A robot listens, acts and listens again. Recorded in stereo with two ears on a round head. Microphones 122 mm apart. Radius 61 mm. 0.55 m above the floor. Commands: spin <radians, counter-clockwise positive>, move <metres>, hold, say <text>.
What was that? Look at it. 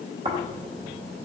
spin -0.79
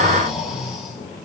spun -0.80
say Facing the snoring, 2 to 4 m away.